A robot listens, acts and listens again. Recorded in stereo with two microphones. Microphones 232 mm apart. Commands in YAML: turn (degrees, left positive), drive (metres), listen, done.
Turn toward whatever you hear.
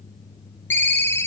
turn: 30
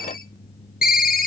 turn: 140
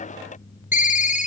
turn: 35
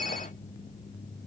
listen: true
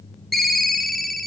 done: "Found it: a ringtone, straight ahead."